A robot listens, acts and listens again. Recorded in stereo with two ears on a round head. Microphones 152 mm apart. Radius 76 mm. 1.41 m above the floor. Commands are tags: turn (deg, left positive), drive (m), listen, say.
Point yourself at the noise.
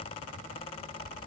<listen/>
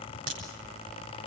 <turn deg="-90"/>
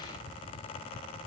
<say>I heard a crack from this way, but can't make it out now.</say>